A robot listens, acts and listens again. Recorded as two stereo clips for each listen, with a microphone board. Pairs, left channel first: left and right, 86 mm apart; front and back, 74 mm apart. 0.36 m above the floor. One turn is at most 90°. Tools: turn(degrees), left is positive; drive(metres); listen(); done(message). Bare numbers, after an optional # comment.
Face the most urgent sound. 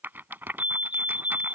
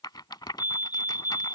# The fire alarm: 120° left.
turn(90)
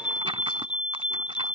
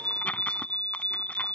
# The fire alarm is now 70° left.
turn(70)
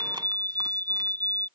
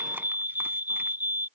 # The fire alarm is now 25° left.
turn(25)
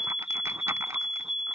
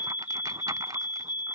done("Facing the fire alarm.")